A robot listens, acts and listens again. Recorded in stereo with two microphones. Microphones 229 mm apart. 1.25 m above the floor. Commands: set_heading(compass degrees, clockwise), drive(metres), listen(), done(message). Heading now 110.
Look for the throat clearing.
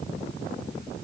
listen()
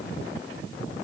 listen()
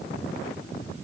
done("I can't make out throat clearing to turn to.")